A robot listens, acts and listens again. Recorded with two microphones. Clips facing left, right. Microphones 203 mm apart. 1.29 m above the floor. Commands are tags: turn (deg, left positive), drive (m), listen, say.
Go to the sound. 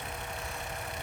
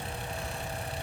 <listen/>
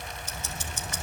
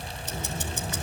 <turn deg="-65"/>
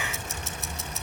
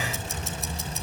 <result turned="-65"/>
<drive m="1.0"/>
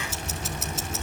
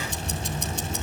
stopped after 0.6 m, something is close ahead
<say>Blocked. The ticking is further on, straight ahead.</say>